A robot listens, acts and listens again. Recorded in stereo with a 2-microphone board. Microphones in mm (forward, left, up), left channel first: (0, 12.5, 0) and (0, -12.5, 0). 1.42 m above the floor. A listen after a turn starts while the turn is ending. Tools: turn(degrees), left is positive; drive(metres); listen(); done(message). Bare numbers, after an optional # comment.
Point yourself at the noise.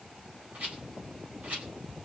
turn(-90)
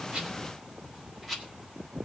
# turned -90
done("Facing the rattle, over 4 m away.")